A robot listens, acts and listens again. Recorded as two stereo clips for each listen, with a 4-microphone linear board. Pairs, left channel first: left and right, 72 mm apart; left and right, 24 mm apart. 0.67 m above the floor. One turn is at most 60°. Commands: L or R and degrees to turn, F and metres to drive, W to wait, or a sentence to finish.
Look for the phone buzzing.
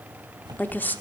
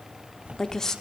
R60
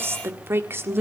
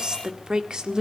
W
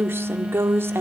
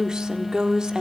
R10
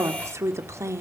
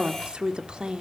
W
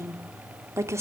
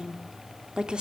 W
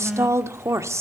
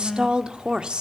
Facing the phone buzzing, 1 to 2 m away.